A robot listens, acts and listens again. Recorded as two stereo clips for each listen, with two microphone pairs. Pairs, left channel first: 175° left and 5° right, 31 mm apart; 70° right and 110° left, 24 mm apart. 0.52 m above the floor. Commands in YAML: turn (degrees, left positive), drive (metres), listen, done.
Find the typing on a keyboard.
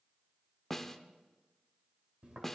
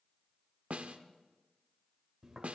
listen: true
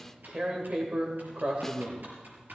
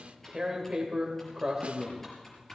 done: "Found it: typing on a keyboard, straight ahead."